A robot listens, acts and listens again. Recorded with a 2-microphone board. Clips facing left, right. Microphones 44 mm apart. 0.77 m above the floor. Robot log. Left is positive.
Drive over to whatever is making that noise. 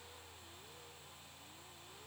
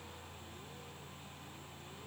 cmd idle
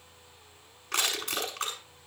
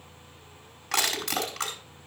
cmd yaw -90
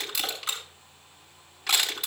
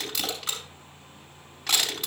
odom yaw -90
cmd fwd 1.0
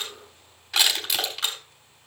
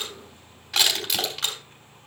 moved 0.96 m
cmd fwd 1.0
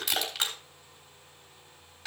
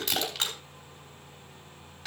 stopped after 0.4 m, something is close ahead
end: Something is in my way. I am facing the crushing but have not reached it.